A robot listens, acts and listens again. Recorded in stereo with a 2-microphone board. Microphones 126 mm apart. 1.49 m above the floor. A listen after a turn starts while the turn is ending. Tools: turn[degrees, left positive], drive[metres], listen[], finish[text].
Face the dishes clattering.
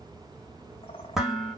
Action: turn[-30]
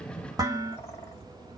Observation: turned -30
Thought: So it is at 145° right.
Action: turn[-145]
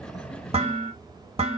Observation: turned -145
Thought: The dishes clattering is now 55° right.
Action: turn[-55]
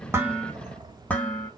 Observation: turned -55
Thought: The dishes clattering is now 10° left.
Action: turn[10]
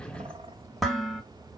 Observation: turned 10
Action: finish[Facing the dishes clattering, 1 to 2 m away.]